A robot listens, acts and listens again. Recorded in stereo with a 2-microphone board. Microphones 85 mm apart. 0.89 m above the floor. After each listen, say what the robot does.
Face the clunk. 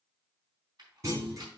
Turn 35° right.
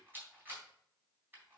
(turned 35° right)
Keep listening.
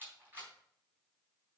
I heard a clunk, but can't make it out now. It was about straight ahead or 110° right.